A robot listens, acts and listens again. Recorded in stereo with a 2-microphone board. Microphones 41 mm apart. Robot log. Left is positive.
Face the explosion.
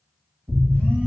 note: The explosion: about 45° right or 135° right.
cmd yaw -45
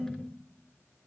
cmd idle
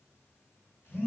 end: I heard an explosion, but can't make it out now. It was about straight ahead or 90° right.